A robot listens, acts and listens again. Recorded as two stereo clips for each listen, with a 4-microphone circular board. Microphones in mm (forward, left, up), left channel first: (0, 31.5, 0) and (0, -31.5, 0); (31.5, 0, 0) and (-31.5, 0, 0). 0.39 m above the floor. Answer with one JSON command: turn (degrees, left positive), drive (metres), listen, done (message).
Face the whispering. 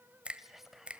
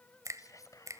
{"done": "Facing the whispering."}